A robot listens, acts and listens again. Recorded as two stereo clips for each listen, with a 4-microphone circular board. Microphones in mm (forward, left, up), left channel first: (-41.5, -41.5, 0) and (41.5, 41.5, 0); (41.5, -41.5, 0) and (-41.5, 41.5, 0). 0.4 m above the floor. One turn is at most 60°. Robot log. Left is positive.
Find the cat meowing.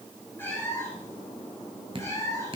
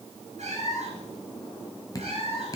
note: The cat meowing: 165° left.
cmd yaw +60
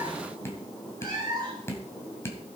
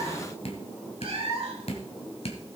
note: The cat meowing is now 100° left.
cmd yaw +60
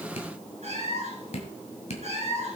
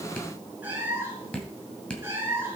note: The cat meowing is now 65° left.
cmd yaw +60
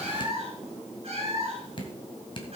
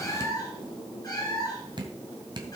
note: The cat meowing is now 10° left.
cmd yaw +10
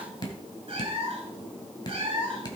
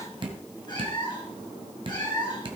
end: Facing the cat meowing, 2 to 4 m away.